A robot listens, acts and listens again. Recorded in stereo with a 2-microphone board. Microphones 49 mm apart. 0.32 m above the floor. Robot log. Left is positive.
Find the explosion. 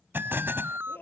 note: The explosion: about 50° right or 130° right.
cmd yaw -50
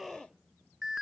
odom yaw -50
cmd idle
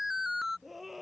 end: I heard an explosion, but can't make it out now. It was about straight ahead or 80° right.